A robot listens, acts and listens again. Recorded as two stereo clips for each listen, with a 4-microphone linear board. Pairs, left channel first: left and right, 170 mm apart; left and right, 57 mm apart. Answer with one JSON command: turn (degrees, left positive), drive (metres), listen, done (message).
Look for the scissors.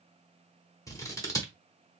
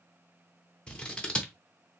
{"turn": 20}
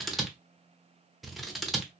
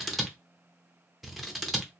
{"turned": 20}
{"done": "Facing the scissors."}